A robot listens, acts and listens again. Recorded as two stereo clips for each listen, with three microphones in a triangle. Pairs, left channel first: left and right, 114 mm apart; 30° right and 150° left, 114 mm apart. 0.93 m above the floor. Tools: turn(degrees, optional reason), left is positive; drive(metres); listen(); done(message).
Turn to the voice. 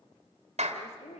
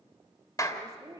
turn(degrees=90, reason="The woman speaking: 90° left.")
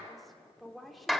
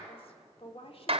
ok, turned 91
done("Facing the woman speaking.")